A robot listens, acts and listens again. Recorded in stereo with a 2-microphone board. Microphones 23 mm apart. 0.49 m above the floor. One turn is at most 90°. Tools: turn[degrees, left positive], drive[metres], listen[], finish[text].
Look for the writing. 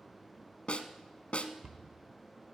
Action: listen[]
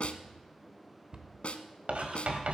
Thought: The writing: about 75° right or 105° right.
Action: turn[-75]
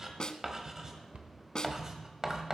Thought: So it is at 20° right.
Action: turn[-20]
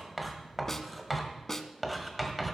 Action: finish[Facing the writing, 1 to 2 m away.]